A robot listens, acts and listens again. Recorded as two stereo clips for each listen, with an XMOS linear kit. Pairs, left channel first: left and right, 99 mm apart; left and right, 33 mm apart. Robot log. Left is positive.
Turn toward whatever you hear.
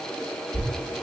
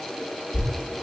cmd yaw +30
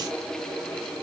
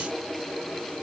cmd idle
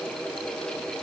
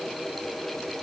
end: I heard a thud, but can't make it out now. It was about 30° right or 150° left.